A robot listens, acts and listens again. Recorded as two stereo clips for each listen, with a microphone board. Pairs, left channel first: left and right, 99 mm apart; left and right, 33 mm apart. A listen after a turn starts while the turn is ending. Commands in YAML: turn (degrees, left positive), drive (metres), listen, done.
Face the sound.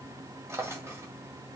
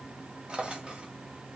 turn: -30
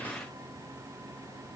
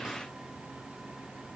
listen: true
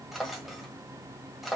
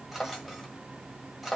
done: "Found it: a drawer, straight ahead."